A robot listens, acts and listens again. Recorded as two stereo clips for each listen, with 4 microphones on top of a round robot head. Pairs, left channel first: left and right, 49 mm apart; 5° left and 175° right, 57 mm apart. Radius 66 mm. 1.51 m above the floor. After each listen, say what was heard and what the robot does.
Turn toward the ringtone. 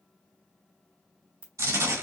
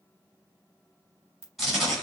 The ringtone: 130° right. Turn 130° right.
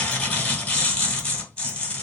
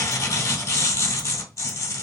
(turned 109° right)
Nothing new. It was at 20° right. Turn 20° right.
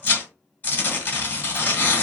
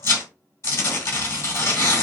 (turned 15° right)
Keep listening.
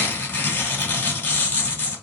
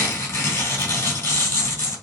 Facing where the ringtone came from. I can't hear it now.